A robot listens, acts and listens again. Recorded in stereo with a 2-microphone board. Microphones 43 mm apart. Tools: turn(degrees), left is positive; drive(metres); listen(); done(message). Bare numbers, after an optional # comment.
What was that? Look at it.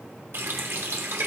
# The running tap: about 65° right or 115° right.
turn(-65)
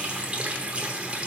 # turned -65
# So it is at 30° right.
turn(-30)
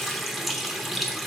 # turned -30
done("Found it: a running tap, straight ahead, under 1 m away.")